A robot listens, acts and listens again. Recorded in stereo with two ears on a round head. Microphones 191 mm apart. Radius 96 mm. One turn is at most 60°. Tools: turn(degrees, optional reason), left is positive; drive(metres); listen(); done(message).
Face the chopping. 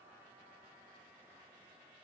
listen()
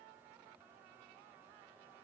listen()
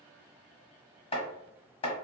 turn(degrees=30, reason="The chopping: about 30° left or 150° left.")
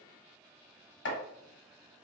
turn(degrees=60, reason="So it is at 125° left.")
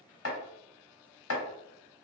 turn(degrees=60, reason="The chopping is now 70° left.")
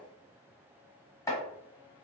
turn(degrees=15, reason="The chopping is now 15° left.")
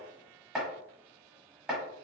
done("Facing the chopping, 1 to 2 m away.")